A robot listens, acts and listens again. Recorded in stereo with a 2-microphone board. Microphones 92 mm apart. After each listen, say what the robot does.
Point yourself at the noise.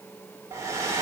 Turn 30° right.
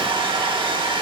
Turn 115° right.
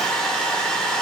Facing the hair dryer, 1 to 2 m away.